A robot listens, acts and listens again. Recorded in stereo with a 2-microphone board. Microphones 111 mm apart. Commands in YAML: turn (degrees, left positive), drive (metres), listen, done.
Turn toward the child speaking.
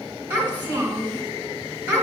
turn: -20
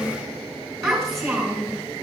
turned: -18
done: "Facing the child speaking."